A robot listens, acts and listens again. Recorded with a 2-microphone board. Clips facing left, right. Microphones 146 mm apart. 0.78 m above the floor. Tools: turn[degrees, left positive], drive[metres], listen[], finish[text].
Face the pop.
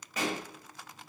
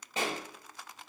Thought: The pop: about 30° right or 150° right.
Action: turn[-30]
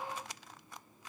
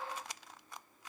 Action: listen[]
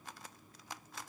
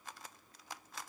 Action: finish[I heard a pop, but can't make it out now. It was about straight ahead or 120° right.]